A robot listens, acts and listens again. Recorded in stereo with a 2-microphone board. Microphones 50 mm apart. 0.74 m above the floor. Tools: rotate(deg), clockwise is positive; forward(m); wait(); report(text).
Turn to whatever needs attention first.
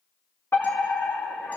rotate(-60)
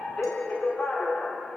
rotate(-35)
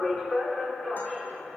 report("Facing the fire alarm.")